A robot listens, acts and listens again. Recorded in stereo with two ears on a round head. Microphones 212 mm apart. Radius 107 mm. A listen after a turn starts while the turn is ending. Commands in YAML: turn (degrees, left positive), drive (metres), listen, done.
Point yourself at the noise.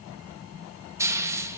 turn: -30
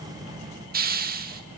turn: -135
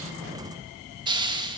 turn: -20
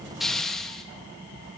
done: "Facing the hiss, 2 to 4 m away."